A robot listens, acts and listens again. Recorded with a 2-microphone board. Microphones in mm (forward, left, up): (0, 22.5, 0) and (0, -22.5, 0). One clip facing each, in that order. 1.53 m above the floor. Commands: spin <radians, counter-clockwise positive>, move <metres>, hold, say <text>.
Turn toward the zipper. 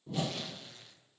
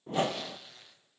spin -0.52
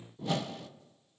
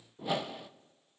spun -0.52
hold
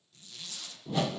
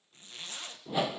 spin -2.53
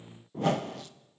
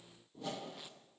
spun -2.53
hold
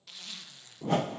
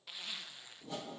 spin -0.26
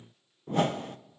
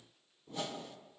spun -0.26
hold
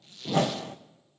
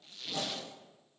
say Found it: a zipper, straight ahead, 1 to 2 m away.